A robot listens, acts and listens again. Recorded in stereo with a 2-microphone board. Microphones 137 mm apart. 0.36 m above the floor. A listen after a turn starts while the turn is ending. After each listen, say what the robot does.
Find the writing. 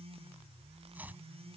Keep listening.
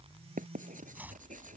Turn 90° right.
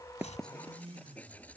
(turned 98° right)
Turn 10° left.
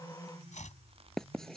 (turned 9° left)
Facing the writing.